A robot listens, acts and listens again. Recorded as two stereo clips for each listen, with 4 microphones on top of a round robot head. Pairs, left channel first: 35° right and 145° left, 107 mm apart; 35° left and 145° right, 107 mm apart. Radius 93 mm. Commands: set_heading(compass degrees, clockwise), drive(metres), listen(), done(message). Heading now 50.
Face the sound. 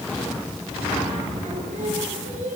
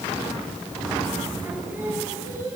set_heading(265)
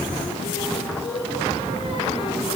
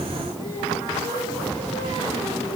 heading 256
done("Facing the singing, over 4 m away.")